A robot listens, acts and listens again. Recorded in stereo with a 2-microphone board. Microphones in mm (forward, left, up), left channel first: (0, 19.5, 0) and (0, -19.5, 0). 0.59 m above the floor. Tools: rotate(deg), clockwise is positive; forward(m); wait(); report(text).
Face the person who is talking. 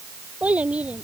rotate(35)
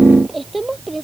report("Facing the child speaking.")